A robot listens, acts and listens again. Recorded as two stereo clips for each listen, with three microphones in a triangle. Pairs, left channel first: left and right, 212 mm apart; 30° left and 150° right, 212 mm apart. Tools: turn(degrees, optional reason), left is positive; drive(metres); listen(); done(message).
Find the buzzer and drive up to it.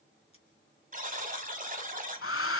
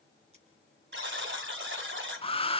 turn(degrees=-135, reason="The buzzer: 135° right.")
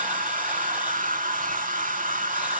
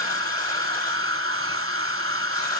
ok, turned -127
turn(degrees=-10, reason="Nothing new. It was at 10° right.")
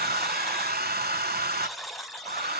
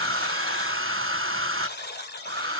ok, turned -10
drive(metres=1.0)
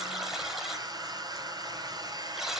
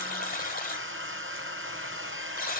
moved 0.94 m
drive(metres=1.0)
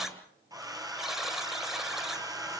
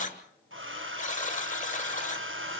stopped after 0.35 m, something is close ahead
done("Arrived at the buzzer, straight ahead.")